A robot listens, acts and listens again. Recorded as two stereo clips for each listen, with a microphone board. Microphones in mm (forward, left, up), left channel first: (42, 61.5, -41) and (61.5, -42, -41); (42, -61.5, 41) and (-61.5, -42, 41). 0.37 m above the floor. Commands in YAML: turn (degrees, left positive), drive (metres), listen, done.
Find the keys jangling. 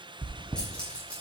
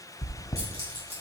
turn: 175
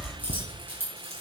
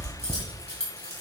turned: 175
turn: -15
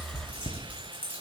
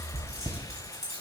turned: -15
turn: -10
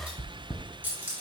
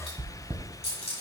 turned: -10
turn: -10
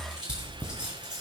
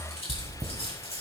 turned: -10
done: "Facing the keys jangling, 2 to 4 m away."